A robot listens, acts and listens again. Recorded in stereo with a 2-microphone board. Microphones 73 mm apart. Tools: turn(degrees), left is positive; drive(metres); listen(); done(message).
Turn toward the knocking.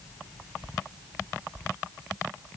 listen()
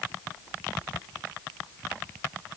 listen()
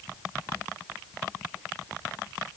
done("I can't make out knocking to turn to.")